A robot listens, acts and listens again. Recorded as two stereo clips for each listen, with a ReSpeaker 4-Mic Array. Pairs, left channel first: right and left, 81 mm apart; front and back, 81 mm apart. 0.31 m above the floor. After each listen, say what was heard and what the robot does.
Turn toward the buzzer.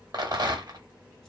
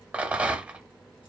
Keep listening.
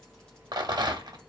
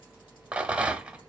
Keep listening.
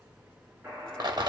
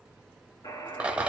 The buzzer: 25° left. Turn 25° left.
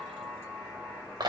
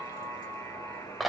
The buzzer is now 10° left. Turn 10° left.
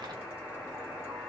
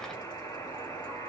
Found it: a buzzer, straight ahead, 2 to 4 m away.